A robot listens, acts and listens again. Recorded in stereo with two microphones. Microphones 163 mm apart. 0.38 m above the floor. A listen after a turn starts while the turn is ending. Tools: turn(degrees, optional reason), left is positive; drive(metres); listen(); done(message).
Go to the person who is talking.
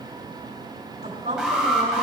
turn(degrees=-65, reason="The woman speaking: about 65° right or 115° right.")
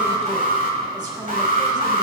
listen()
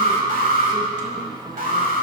listen()
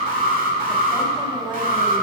turn(degrees=-30, reason="So it is at 30° right.")
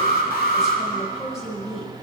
drive(metres=1.0)
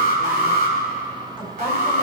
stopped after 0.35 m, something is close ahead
listen()
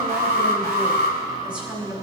turn(degrees=-10, reason="The woman speaking is now 10° right.")
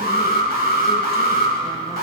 listen()
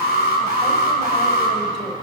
listen()
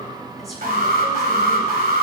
done("I heard a woman speaking from this way, but can't make it out now. I did not reach it.")